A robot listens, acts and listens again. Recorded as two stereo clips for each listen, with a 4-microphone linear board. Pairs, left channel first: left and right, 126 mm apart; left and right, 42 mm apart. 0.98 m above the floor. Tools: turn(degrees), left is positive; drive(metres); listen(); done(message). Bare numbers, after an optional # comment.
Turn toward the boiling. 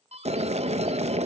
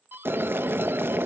# The boiling: about 60° right or 120° right.
turn(-60)
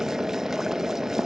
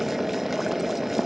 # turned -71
done("Found it: boiling, straight ahead, under 1 m away.")